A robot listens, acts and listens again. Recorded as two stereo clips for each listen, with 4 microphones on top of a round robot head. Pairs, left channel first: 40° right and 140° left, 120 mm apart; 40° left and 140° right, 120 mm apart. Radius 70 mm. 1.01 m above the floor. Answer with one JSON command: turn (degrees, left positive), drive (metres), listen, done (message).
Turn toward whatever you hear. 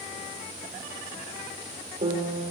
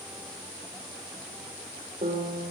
{"turn": 175}
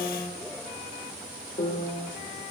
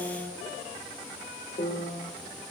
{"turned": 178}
{"done": "Facing the piano."}